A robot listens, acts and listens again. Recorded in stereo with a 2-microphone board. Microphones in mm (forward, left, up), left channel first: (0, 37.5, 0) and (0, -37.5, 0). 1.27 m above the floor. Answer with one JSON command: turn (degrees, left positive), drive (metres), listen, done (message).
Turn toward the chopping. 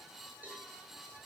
{"listen": true}
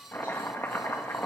{"turn": 30}
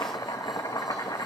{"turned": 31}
{"turn": 120}
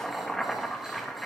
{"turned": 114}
{"done": "Facing the chopping."}